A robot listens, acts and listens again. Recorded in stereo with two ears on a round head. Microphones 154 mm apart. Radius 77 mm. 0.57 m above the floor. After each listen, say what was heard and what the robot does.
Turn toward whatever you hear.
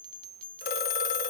The phone ringing: about 60° left or 120° left. Turn 60° left.
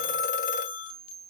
So it is at 55° left. Turn 55° left.
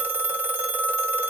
The phone ringing is now 10° right. Turn 10° right.
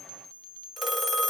Facing the phone ringing.